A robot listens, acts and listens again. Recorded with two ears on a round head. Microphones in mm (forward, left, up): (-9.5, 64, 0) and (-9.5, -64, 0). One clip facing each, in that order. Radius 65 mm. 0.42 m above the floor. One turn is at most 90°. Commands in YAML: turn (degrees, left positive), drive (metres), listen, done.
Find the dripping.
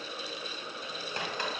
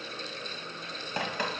turn: -75
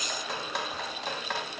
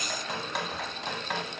done: "Found it: dripping, straight ahead."